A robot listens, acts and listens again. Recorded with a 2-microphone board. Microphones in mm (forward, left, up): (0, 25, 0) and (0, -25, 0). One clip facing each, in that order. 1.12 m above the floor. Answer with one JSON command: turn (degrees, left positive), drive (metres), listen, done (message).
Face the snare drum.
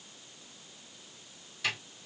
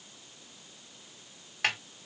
{"turn": -60}
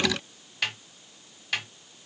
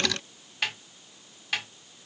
{"done": "Facing the snare drum."}